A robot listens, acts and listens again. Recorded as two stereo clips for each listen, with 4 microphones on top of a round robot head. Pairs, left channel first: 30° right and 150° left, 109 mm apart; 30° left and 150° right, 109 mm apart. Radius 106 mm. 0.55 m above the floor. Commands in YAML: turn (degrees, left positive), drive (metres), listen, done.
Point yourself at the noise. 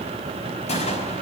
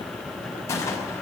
turn: -30
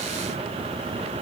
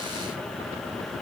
done: "I heard a gunshot from this way, but can't make it out now."